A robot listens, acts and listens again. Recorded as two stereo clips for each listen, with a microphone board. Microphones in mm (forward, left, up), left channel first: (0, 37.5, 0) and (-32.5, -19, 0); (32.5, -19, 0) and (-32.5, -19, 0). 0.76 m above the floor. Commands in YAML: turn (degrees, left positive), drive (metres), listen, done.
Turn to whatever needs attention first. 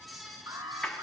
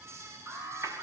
turn: -130
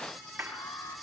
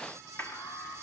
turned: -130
turn: 25
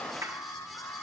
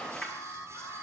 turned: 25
turn: 10
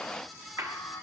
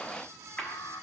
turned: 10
done: "Facing the alarm."